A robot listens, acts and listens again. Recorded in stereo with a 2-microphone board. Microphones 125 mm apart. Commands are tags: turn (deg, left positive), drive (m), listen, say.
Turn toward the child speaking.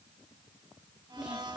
<turn deg="-30"/>
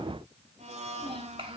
<turn deg="-130"/>
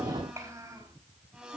<turn deg="-25"/>
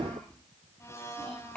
<say>Facing the child speaking.</say>